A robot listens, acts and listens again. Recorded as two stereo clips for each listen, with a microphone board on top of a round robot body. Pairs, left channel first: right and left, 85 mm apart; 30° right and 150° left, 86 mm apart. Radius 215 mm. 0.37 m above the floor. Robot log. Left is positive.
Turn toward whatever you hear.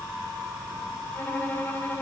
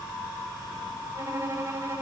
note: The violin: 155° right.
cmd yaw -155
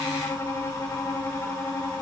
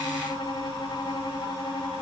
note: The violin is now 35° right.
cmd yaw -35
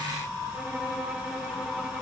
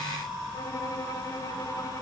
cmd idle
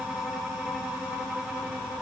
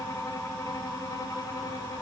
cmd idle
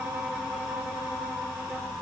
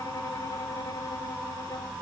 end: I heard a violin from this way, but can't make it out now.